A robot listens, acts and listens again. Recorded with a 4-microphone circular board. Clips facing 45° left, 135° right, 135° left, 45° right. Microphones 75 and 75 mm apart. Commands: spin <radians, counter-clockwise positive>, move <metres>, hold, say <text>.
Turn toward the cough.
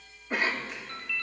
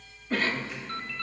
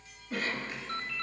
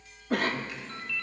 spin -0.44
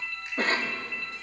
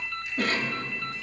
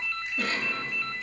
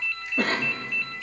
say Facing the cough.